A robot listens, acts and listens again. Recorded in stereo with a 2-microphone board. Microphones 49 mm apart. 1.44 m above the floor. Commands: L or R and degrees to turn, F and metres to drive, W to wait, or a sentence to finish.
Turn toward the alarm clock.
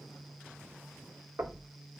W
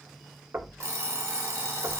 R90
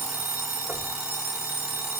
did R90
R10
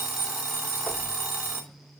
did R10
Found it: an alarm clock, straight ahead.